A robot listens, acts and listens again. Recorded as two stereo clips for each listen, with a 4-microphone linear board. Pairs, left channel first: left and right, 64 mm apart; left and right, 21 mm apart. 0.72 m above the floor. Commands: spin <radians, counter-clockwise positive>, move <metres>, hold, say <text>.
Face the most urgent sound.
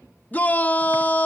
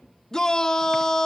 spin 0.44
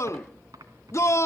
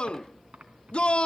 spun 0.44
spin 2.09
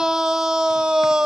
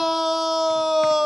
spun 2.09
spin -0.17
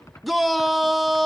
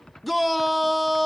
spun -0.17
say Found it: a shout, straight ahead.